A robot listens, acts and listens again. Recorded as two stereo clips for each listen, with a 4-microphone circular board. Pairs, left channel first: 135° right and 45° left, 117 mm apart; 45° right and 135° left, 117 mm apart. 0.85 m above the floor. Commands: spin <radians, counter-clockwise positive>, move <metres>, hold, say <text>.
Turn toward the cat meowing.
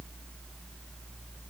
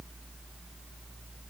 hold
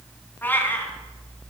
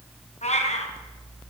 spin -1.05
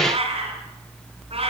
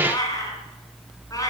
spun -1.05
spin 0.17
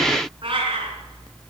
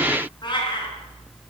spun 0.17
say Facing the cat meowing, over 4 m away.